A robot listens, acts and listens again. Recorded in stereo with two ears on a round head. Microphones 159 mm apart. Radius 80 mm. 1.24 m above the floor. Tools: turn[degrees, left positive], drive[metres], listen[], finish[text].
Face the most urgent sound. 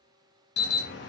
Thought: The alarm: about 65° left or 115° left.
Action: turn[65]
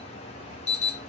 Thought: So it is at 40° left.
Action: turn[40]
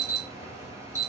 Thought: The alarm is now 15° right.
Action: turn[-15]
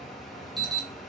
Action: finish[Found it: an alarm, straight ahead.]